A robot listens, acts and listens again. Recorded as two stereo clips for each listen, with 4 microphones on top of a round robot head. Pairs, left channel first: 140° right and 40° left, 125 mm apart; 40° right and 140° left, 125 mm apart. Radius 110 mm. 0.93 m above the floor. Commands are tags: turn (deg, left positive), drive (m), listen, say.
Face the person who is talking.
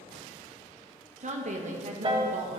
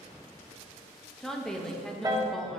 <turn deg="50"/>
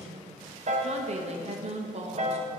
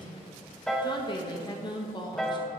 <turn deg="15"/>
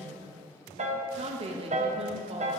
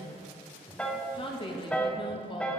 <turn deg="10"/>
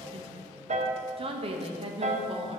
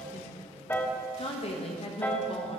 <say>Found it: a woman speaking, straight ahead, 1 to 2 m away.</say>